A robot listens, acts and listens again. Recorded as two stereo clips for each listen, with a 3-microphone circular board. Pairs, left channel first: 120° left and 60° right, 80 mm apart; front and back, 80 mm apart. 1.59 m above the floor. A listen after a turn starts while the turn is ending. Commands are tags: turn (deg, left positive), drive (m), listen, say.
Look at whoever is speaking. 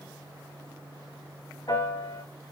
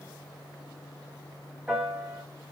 <listen/>
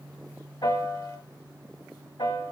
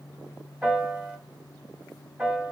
<listen/>
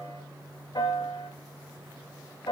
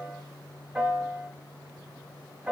<say>I can't make out anyone speaking to turn to.</say>